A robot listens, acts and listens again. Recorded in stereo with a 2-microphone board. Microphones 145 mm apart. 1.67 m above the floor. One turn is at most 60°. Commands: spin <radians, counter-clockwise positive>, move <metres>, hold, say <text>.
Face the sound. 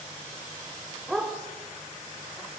spin 0.52
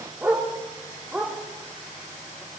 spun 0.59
spin -0.52
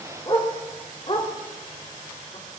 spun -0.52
spin 0.79
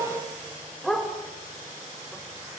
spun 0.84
say Facing the dog barking.